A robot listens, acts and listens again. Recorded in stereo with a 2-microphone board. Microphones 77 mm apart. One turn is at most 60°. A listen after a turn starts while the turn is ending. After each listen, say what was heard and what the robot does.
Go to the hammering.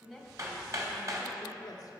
The hammering: about 45° right or 135° right. Turn 45° right.
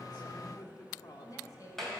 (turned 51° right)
Drive 1.0 m forward.
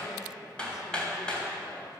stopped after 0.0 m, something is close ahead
The hammering is now 15° left. Turn 15° left.
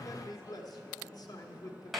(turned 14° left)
Blocked. The hammering is further on, straight ahead.